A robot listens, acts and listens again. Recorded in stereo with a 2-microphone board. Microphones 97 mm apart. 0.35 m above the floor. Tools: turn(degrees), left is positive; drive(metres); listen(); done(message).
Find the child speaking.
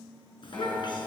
turn(degrees=50)
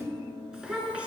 turn(degrees=-15)
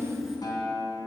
done("Found it: a child speaking, straight ahead, 2 to 4 m away.")